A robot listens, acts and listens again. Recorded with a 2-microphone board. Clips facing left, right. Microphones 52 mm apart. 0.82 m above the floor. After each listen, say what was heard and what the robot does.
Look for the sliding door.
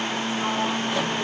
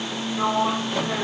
The sliding door: about 60° right or 120° right. Turn 60° right.
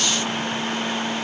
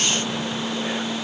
Keep listening.
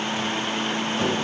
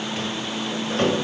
So it is at 60° right. Turn 60° right.
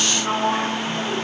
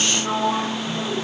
The sliding door is now 15° left. Turn 15° left.
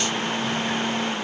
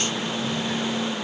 Keep listening.
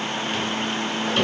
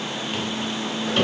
Facing the sliding door, 2 to 4 m away.